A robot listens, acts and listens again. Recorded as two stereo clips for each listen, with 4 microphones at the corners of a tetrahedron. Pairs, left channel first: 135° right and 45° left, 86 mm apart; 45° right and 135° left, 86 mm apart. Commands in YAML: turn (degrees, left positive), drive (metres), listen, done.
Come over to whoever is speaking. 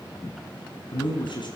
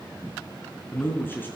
turn: -110
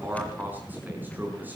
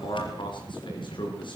turn: -25
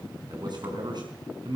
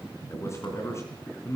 turn: 15
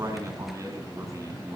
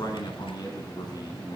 drive: 1.0
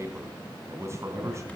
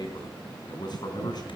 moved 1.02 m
turn: -10
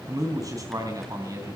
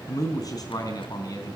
drive: 1.0
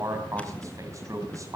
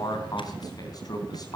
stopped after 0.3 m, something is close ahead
done: "Something is in my way. I am facing the man speaking but have not reached it."